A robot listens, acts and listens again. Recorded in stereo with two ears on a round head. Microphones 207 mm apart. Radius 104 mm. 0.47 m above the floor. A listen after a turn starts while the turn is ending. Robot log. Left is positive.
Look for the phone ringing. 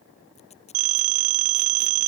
note: The phone ringing: about 35° right or 145° right.
cmd yaw -35
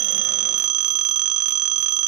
note: So it is at 105° right.
cmd yaw -105
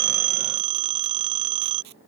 note: The phone ringing is now 20° right.
cmd yaw -20
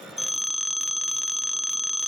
end: Facing the phone ringing.